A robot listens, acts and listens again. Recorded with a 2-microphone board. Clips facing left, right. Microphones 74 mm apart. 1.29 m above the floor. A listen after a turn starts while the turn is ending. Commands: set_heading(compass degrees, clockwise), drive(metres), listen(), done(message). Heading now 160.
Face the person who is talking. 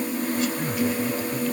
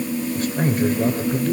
set_heading(205)
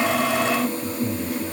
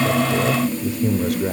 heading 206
set_heading(291)
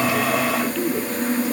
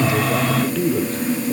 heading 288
done("Facing the man speaking, 2 to 4 m away.")